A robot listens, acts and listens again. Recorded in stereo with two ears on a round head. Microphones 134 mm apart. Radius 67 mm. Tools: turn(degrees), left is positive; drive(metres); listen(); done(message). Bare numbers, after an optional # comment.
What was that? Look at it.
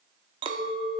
# The clink: about 30° right or 150° right.
turn(-30)
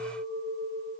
# So it is at 110° right.
turn(-110)
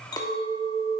# The clink is now 30° left.
turn(30)
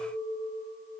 done("Facing the clink.")